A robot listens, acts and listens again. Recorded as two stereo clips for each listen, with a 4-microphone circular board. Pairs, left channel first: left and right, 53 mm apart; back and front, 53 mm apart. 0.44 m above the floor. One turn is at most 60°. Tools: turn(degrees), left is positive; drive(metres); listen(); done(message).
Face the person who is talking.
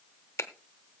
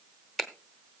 listen()
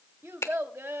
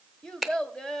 turn(degrees=-60)
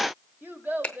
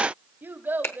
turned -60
turn(degrees=-45)
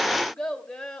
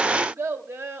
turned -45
turn(degrees=15)
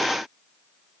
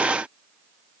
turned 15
listen()
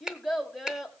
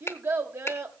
done("Found it: a child speaking, straight ahead.")